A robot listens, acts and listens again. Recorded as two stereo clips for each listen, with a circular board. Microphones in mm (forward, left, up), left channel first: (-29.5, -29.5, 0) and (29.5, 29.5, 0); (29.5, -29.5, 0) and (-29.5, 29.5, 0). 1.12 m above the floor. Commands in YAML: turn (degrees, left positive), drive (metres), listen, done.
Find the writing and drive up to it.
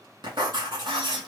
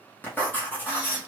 turn: 20
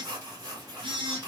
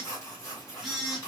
drive: 1.0
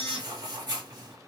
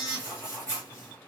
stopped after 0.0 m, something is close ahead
turn: 10
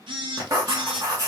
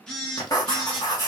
done: "Something is in my way. I am facing the writing but have not reached it."